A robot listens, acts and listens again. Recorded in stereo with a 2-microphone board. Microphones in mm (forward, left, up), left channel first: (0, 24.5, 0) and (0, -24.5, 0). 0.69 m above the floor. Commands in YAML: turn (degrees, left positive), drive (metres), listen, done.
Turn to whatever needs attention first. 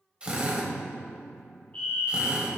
turn: 30
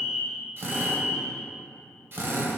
done: "Facing the fire alarm, 2 to 4 m away."